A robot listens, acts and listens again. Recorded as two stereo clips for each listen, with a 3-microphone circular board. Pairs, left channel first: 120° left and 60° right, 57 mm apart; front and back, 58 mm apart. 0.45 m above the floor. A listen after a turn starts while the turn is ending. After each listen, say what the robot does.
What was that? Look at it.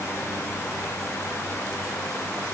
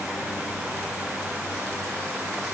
Keep listening.
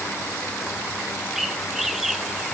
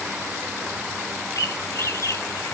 Turn 30° left.
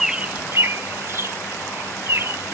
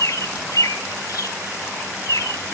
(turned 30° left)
Turn 15° right.
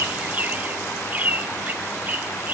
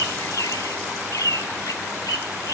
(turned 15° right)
Facing the bird.